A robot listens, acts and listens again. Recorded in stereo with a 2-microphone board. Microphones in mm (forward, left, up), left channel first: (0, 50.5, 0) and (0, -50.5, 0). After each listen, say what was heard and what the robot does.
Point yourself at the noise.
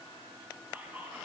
The whispering: about 15° right or 165° right. Turn 15° right.
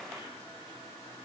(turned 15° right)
Keep listening.
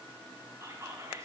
So it is at 150° right. Turn 150° right.
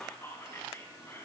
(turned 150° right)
The whispering is now 30° left. Turn 30° left.
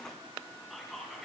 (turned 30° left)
Facing the whispering, 2 to 4 m away.